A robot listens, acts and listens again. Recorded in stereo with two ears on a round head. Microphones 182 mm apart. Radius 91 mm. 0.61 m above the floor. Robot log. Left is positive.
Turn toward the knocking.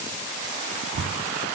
cmd yaw -90
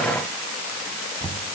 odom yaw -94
note: So it is at 10° left.
cmd yaw +10
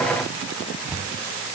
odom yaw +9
end: Found it: knocking, straight ahead.